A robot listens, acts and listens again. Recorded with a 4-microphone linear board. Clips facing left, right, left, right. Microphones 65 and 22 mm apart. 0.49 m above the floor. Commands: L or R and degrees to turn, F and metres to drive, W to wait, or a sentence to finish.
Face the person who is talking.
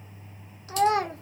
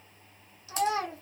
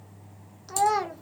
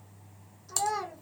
L55
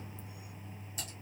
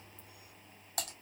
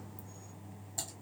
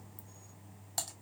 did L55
W
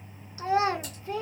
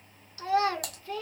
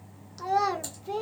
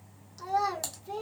L25
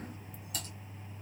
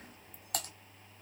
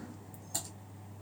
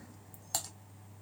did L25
W
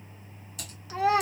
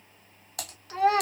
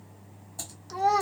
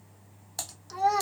Facing the child speaking.